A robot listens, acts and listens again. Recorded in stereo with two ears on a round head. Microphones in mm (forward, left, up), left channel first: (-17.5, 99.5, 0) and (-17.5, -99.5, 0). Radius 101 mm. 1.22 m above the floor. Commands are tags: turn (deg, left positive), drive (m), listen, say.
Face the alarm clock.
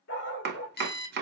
<turn deg="45"/>
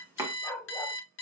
<turn deg="75"/>
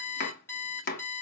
<turn deg="10"/>
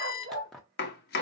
<say>Found it: an alarm clock, straight ahead.</say>